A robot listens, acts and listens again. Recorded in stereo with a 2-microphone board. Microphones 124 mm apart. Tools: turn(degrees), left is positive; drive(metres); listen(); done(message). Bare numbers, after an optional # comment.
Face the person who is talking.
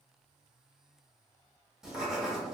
listen()
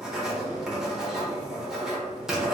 listen()
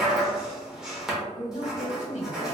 # The woman speaking: about 65° left or 115° left.
turn(65)
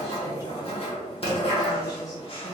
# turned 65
listen()
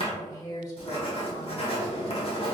# So it is at 30° left.
turn(30)
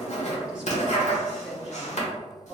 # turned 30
listen()
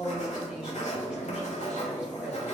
# The woman speaking is now 10° right.
turn(-10)
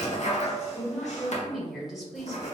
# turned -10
done("Found it: a woman speaking, straight ahead, 1 to 2 m away.")